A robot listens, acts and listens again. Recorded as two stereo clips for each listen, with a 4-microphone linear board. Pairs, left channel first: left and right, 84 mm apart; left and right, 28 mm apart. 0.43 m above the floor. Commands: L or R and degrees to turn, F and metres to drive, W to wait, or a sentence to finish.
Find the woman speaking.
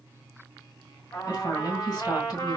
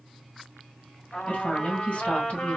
L50
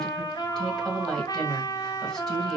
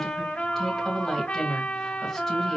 L10
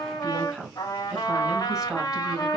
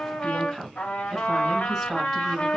Facing the woman speaking, 2 to 4 m away.